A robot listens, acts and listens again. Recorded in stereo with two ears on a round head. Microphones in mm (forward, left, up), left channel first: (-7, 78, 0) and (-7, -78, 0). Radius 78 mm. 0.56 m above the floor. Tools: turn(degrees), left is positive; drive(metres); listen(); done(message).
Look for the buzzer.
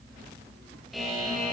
turn(degrees=30)
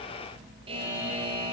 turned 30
turn(degrees=-30)
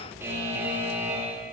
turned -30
turn(degrees=-15)
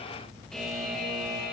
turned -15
done("Found it: a buzzer, straight ahead.")